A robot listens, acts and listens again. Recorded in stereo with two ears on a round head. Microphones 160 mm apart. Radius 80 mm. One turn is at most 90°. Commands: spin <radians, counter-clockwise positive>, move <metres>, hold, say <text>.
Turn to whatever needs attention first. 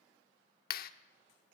hold
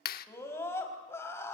spin 0.52
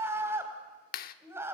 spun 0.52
spin -0.26
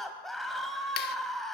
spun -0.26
say Found it: a scream, straight ahead.